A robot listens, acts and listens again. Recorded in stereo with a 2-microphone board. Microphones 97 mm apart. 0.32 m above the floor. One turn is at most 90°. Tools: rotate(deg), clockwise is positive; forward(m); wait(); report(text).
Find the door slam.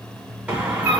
rotate(30)
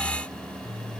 wait()
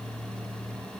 report("I heard a door slam, but can't make it out now. It was about 20° left or 140° right.")